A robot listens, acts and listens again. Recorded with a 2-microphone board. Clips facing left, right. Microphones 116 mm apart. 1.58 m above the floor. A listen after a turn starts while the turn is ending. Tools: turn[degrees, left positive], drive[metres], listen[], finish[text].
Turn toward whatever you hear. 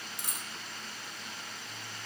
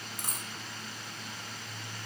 Thought: The dropped coin: about 45° right or 135° right.
Action: turn[-45]
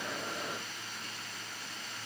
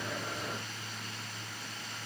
Action: listen[]
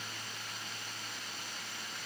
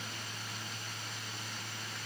Action: finish[I heard a dropped coin, but can't make it out now. It was about straight ahead or 90° right.]